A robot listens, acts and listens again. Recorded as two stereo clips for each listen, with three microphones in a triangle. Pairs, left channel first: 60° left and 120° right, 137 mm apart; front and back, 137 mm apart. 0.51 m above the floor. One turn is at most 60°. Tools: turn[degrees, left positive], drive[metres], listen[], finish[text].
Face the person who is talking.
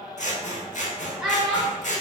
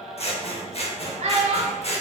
Thought: The child speaking: 155° left.
Action: turn[60]
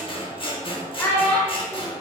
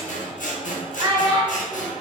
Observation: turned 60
Thought: The child speaking is now 125° left.
Action: turn[60]
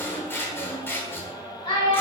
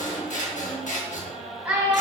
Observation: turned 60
Thought: The child speaking is now 100° left.
Action: turn[60]
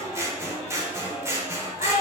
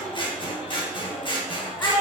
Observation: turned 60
Thought: The child speaking is now 65° left.
Action: turn[60]
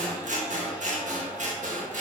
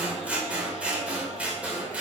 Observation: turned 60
Action: listen[]
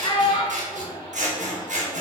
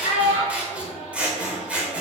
Thought: The child speaking is now 15° left.
Action: turn[15]
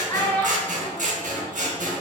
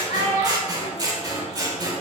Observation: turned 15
Action: finish[Found it: a child speaking, straight ahead.]